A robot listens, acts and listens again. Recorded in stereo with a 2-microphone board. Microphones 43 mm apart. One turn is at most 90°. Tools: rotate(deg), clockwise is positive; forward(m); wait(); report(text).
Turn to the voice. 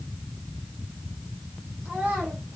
rotate(35)
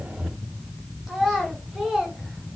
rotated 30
rotate(10)
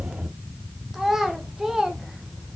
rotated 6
rotate(10)
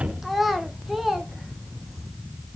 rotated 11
report("Found it: a child speaking, straight ahead.")